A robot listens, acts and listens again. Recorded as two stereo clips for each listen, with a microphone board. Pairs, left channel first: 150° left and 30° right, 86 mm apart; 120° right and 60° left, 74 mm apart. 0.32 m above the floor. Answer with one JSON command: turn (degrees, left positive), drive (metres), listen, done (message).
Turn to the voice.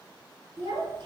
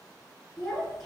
{"turn": -35}
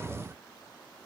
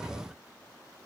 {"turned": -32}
{"listen": true}
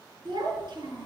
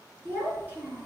{"done": "Facing the child speaking."}